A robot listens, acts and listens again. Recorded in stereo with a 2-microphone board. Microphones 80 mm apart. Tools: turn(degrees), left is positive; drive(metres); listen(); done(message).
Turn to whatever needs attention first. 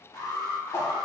turn(degrees=60)
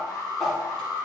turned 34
turn(degrees=75)
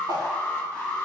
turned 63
turn(degrees=15)
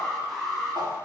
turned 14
done("Facing the alarm, 1 to 2 m away.")